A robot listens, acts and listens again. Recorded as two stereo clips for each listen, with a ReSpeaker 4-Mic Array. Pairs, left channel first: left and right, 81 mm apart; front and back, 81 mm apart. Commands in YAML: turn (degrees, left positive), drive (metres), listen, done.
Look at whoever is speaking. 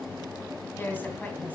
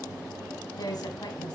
turn: 25
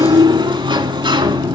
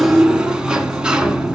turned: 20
listen: true
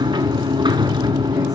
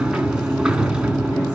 listen: true
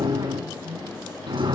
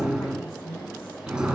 turn: -60
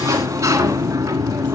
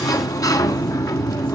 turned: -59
listen: true
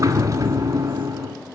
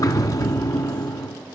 listen: true
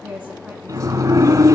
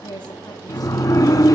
turn: -15
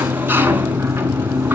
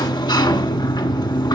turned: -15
listen: true
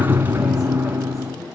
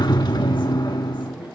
listen: true
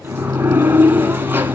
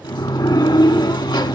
done: "I heard a woman speaking from this way, but can't make it out now."